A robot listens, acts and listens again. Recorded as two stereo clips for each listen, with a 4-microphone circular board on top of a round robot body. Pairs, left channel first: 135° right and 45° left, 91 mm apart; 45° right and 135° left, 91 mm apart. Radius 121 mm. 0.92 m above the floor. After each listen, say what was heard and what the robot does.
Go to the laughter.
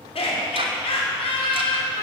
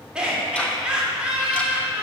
The laughter: 145° right. Turn 145° right.
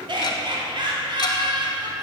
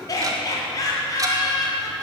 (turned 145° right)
The laughter is now 10° left. Turn 10° left.
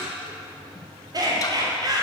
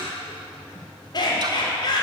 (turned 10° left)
Drive 1.0 m forward.
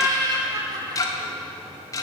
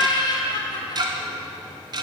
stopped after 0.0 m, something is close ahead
Blocked. The laughter is further on, straight ahead.